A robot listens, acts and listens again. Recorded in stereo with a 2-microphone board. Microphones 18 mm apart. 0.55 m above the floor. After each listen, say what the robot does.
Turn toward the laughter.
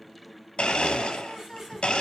Turn 30° right.
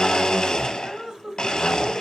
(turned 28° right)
Turn 130° right.
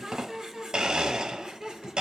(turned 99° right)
Turn 45° right.
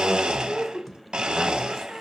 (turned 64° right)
Facing the laughter, 1 to 2 m away.